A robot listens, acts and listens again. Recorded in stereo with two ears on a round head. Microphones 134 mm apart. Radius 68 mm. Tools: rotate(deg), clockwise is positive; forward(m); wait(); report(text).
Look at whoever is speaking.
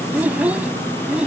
rotate(30)
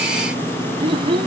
rotate(145)
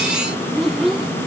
report("Facing the child speaking.")